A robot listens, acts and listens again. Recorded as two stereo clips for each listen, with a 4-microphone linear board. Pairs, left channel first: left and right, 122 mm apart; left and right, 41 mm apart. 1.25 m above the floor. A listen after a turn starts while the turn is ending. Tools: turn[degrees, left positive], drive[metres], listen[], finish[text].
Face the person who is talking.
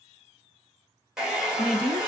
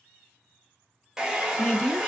Thought: The woman speaking: about 50° left or 130° left.
Action: turn[50]
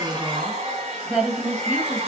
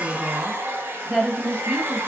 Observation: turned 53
Action: finish[Facing the woman speaking, 1 to 2 m away.]